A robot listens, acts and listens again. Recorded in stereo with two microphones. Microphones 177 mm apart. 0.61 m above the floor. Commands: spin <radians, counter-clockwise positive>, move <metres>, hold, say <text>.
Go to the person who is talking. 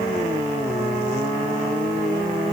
hold
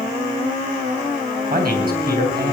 spin -1.05
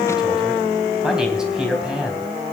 move 1.0
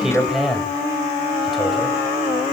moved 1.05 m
move 1.0
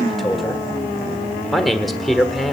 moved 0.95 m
move 1.0
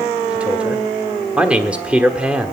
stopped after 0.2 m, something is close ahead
spin -0.17
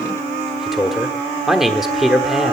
say Arrived at the man speaking, straight ahead.